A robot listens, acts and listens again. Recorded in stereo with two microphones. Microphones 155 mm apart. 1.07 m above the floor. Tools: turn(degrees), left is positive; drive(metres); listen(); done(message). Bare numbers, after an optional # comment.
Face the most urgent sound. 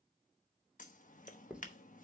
listen()
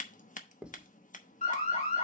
# The alarm: about 45° left or 135° left.
turn(45)
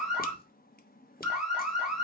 done("Facing the alarm.")